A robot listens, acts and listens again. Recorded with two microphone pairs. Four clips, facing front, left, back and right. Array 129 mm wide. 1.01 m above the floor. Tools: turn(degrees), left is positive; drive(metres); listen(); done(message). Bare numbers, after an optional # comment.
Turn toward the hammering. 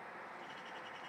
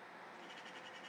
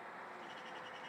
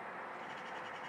listen()
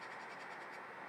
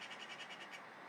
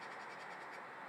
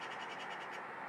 listen()
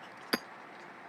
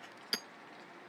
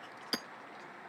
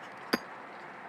# The hammering: 70° right.
turn(-70)
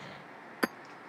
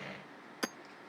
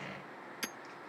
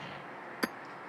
done("Facing the hammering.")